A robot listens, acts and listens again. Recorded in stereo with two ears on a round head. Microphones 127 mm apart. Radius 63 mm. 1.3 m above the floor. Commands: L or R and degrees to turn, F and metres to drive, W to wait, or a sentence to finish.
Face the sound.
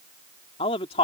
L40
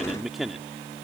Facing the man speaking.